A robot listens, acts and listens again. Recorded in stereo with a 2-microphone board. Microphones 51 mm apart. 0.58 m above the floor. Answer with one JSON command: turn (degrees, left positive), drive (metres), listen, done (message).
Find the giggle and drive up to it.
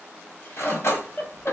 {"turn": 45}
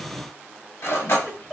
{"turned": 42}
{"drive": 1.0}
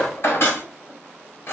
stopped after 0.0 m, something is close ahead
{"listen": true}
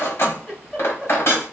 {"done": "Something is in my way. I am facing the giggle but have not reached it."}